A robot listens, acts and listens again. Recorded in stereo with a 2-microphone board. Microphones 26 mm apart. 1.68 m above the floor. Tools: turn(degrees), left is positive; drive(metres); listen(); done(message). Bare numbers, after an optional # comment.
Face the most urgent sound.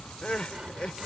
# The crying: about 40° left or 140° left.
turn(40)
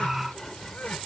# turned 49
listen()
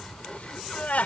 # So it is at 85° left.
turn(85)
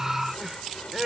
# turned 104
# The crying is now 20° right.
turn(-20)
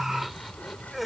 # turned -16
done("Found it: crying, straight ahead.")